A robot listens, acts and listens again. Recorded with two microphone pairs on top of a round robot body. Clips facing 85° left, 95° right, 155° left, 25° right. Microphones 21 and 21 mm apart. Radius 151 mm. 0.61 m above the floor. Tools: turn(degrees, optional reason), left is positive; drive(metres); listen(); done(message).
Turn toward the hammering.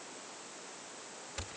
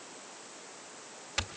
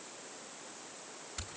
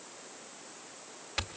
listen()
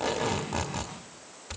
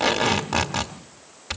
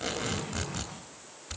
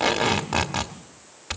listen()
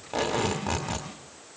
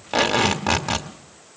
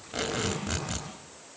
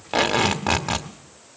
done("I can't make out hammering to turn to.")